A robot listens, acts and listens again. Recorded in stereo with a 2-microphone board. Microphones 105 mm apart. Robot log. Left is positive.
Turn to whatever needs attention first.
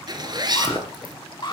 note: The alarm: about 50° left or 130° left.
cmd yaw +50
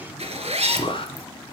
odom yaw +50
note: So it is at 65° left.
cmd yaw +65
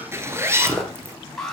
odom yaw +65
end: Facing the alarm, 2 to 4 m away.